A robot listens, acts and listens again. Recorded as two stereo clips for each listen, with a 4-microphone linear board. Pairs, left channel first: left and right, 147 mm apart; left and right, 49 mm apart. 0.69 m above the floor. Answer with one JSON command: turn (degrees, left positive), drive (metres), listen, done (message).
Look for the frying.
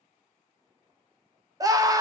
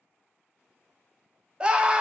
{"listen": true}
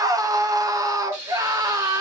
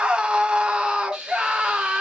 {"turn": -20}
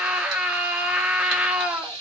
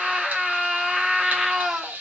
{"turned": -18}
{"turn": -145}
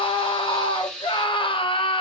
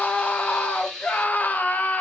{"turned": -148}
{"done": "Facing the frying, 1 to 2 m away."}